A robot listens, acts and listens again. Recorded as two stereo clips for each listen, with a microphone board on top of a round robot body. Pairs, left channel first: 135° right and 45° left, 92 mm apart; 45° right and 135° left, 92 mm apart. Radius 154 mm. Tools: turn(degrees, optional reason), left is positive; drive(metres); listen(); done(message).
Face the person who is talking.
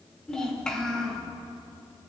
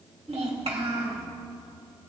turn(degrees=145, reason="The child speaking: 145° left.")
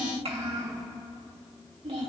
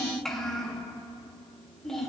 turn(degrees=40, reason="The child speaking is now 40° left.")
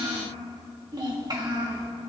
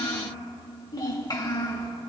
done("Found it: a child speaking, straight ahead, 2 to 4 m away.")